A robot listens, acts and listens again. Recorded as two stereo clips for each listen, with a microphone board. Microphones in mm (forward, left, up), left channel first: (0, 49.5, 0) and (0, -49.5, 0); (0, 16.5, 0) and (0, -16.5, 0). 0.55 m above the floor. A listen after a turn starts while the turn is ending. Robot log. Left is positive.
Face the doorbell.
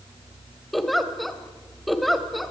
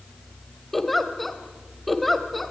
cmd idle
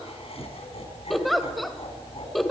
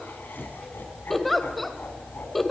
cmd idle
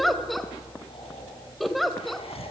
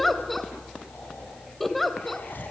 end: I can't make out a doorbell, only laughter and a giggle.